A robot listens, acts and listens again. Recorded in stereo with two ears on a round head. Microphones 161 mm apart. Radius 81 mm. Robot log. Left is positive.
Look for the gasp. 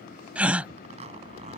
cmd yaw -30
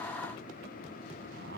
cmd idle
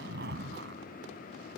end: I heard a gasp, but can't make it out now. It was about 20° left or 140° right.